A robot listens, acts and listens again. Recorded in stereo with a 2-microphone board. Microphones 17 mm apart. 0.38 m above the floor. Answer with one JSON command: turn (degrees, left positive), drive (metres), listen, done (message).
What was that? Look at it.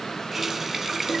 {"turn": -25}
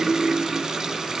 {"turn": -130}
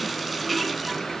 {"done": "Found it: a running tap, straight ahead."}